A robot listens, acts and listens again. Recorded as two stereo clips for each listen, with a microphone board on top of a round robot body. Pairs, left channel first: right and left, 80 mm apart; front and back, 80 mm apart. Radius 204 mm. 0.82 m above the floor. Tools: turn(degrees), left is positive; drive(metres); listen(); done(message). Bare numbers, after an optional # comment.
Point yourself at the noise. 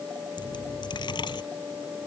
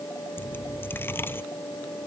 # The dropped coin: 65° right.
turn(-65)
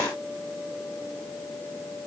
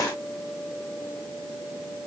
done("I heard a dropped coin from this way, but can't make it out now.")